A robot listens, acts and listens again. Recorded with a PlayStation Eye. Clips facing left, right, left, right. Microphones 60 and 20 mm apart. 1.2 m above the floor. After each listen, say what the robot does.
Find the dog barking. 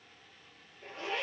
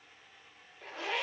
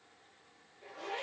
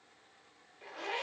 Keep listening.
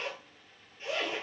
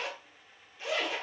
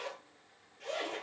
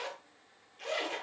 Keep listening.
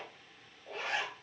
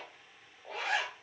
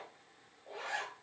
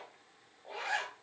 I can't make out a dog barking to turn to.